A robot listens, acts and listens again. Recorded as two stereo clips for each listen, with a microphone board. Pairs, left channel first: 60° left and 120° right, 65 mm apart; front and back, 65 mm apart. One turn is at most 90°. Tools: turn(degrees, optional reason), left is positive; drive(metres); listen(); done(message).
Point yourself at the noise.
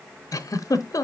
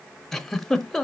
turn(degrees=80, reason="The giggle: 80° left.")
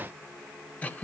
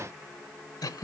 done("Found it: a giggle, straight ahead, under 1 m away.")